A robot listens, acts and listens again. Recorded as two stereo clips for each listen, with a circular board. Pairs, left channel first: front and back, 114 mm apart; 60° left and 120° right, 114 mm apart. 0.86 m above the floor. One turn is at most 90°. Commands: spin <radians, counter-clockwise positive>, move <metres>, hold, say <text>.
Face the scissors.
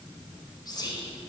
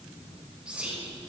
hold
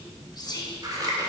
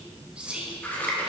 spin 1.57
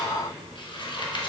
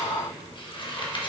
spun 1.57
spin 0.52
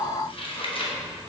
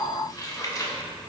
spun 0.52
spin 0.17
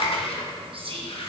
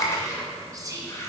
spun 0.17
say Facing the scissors, under 1 m away.